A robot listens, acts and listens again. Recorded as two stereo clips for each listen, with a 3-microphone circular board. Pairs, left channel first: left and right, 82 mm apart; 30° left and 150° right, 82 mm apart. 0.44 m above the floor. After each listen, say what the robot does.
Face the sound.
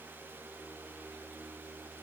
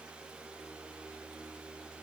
Keep listening.
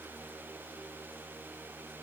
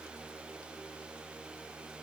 Keep listening.
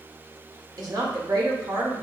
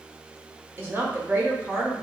Turn 95° right.
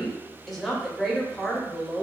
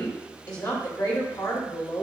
Found it: a woman speaking, straight ahead.